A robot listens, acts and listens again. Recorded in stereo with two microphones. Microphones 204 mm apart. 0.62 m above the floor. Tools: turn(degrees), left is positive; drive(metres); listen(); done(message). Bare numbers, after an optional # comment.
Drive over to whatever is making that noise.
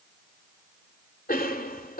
# The cough: about 45° left or 135° left.
turn(45)
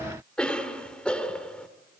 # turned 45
drive(1.0)
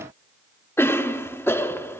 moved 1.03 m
# The cough is now 15° left.
turn(15)
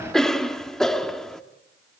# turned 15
drive(1.0)
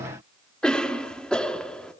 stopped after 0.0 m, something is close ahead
done("Arrived at the cough, straight ahead.")